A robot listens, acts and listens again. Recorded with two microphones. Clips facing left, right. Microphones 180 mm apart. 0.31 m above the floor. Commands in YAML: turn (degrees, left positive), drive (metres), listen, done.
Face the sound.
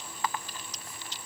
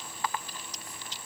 listen: true
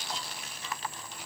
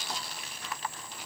listen: true
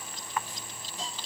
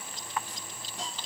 turn: -70
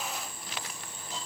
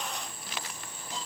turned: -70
listen: true
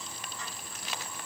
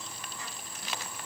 listen: true
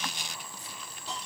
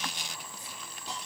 turn: -20
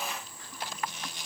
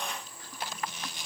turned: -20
listen: true
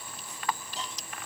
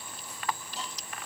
listen: true
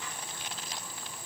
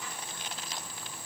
done: "Facing where the hiss came from. I can't hear it now."